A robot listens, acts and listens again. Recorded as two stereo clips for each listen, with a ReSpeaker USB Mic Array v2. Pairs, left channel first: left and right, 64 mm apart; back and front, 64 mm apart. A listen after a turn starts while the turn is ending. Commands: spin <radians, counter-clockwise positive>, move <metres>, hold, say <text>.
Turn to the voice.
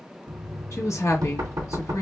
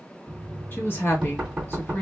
spin 2.18
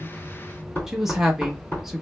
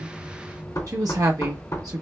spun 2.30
say Found it: a woman speaking, straight ahead.